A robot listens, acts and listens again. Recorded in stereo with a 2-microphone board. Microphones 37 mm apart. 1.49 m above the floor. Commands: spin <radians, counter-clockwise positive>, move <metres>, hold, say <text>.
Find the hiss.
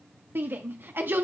hold
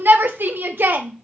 hold
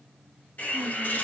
spin 1.05
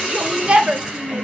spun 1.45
spin -0.35
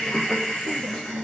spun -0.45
say Found it: a hiss, straight ahead, over 4 m away.